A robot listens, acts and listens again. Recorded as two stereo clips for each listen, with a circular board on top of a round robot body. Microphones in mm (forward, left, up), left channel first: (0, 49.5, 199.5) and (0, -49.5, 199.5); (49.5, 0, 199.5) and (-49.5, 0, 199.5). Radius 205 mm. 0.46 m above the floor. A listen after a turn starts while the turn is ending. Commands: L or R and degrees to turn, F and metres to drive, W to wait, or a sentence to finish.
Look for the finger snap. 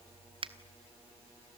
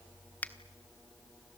R75
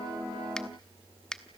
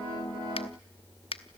L10
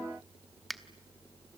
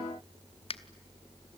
Facing the finger snap, 1 to 2 m away.